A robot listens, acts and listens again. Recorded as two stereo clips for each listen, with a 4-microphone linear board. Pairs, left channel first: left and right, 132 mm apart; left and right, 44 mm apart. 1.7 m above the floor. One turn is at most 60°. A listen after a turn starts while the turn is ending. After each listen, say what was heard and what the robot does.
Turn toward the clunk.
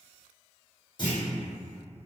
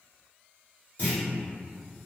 The clunk: about 35° left or 145° left. Turn 35° left.
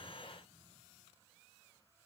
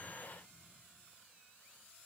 Keep listening.
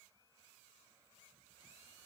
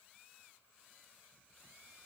I heard a clunk, but can't make it out now. It was about straight ahead or 110° left.